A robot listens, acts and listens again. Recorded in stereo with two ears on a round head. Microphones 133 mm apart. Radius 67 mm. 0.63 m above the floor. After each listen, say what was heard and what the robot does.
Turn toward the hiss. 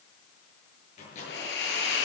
Turn 90° left.
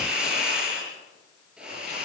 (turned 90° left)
Facing the hiss.